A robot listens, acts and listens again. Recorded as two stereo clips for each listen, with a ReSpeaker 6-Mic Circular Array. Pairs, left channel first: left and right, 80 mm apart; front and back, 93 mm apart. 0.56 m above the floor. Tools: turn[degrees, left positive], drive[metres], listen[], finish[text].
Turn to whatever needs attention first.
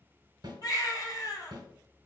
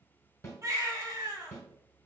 Thought: The baby crying: 130° left.
Action: turn[130]
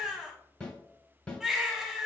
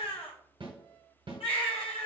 Action: finish[Facing the baby crying.]